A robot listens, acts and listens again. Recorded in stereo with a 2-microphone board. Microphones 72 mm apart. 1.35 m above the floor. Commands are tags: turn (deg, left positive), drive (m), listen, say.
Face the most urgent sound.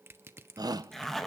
<turn deg="-70"/>
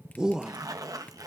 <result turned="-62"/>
<turn deg="-10"/>
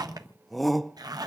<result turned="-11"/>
<say>Facing the shout, 1 to 2 m away.</say>